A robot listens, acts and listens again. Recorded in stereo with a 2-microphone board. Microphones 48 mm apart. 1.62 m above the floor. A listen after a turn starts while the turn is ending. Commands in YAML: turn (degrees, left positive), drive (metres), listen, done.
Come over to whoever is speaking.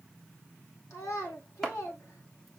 turn: 75
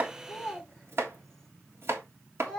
drive: 1.0
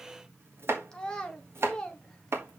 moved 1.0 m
turn: 15
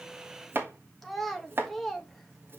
drive: 1.0
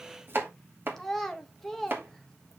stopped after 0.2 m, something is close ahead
done: "Arrived at the child speaking, straight ahead."